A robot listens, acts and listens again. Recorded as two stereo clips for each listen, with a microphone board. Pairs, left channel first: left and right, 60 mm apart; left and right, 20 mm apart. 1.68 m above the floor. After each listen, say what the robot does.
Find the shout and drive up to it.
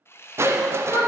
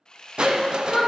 Turn 70° left.
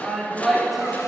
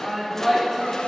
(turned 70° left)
Drive 1.0 m forward.
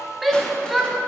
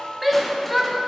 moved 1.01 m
Drive 1.0 m forward.
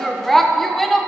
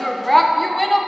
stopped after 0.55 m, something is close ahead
I am next to the shout.